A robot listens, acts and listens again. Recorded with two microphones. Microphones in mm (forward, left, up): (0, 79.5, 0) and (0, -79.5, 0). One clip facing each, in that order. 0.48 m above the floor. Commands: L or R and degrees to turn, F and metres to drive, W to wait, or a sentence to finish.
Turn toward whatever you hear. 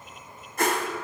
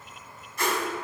L50
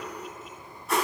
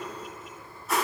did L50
Found it: a whoosh, straight ahead, 1 to 2 m away.